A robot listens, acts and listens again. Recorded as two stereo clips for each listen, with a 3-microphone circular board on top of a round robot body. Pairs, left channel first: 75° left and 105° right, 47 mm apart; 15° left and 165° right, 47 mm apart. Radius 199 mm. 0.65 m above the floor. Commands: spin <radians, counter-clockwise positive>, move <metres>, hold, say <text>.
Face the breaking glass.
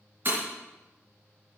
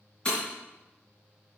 spin -0.96
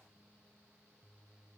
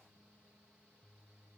say I heard breaking glass from this way, but can't make it out now.